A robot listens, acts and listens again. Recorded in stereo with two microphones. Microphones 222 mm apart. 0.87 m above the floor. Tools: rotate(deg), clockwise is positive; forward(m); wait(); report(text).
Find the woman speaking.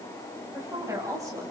rotate(30)
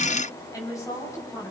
rotate(-15)
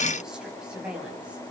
report("Found it: a woman speaking, straight ahead.")